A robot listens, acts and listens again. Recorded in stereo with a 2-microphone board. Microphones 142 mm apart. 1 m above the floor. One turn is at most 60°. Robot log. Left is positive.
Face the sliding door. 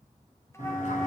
note: The sliding door: about 60° left or 120° left.
cmd yaw +60
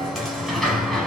end: Found it: a sliding door, straight ahead.